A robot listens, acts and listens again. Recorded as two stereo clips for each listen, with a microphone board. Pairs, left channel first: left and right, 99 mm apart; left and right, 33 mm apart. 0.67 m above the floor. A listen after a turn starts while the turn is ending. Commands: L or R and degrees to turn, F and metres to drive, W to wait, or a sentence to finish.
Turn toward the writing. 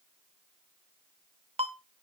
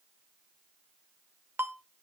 W
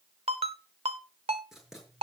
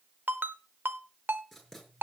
R30
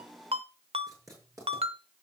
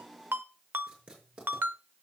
R145
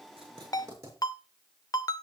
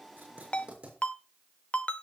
R30
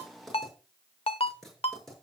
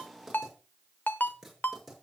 Found it: writing, straight ahead.